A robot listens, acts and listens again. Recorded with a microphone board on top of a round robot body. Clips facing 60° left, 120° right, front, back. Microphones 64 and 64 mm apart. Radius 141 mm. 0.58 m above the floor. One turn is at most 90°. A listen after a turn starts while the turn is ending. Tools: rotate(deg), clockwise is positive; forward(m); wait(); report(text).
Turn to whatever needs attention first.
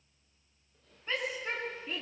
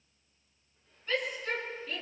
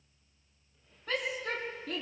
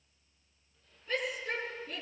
report("Found it: a shout, straight ahead.")